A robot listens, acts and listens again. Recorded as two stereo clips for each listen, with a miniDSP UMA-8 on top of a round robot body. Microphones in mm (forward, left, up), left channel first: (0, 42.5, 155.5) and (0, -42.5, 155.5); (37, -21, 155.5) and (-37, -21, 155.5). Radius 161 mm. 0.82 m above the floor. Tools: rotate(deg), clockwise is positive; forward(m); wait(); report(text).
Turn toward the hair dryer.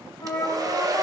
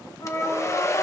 rotate(45)
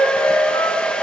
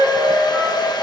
rotate(-15)
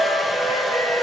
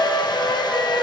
report("Found it: a hair dryer, straight ahead.")